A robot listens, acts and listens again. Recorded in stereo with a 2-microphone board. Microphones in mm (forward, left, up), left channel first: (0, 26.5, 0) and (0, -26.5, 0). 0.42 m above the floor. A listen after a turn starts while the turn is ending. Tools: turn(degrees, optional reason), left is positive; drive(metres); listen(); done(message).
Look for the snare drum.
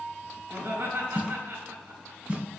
turn(degrees=-25, reason="The snare drum: about 25° right or 155° right.")
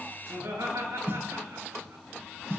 turn(degrees=-130, reason="So it is at 130° right.")
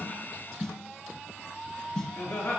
turn(degrees=10, reason="The snare drum is now 10° left.")
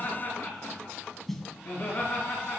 done("Found it: a snare drum, straight ahead, 1 to 2 m away.")